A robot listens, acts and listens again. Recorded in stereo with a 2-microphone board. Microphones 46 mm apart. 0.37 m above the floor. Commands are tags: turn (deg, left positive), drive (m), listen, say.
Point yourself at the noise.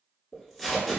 <turn deg="30"/>
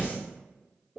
<turn deg="-25"/>
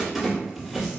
<say>Found it: tape being pulled, straight ahead.</say>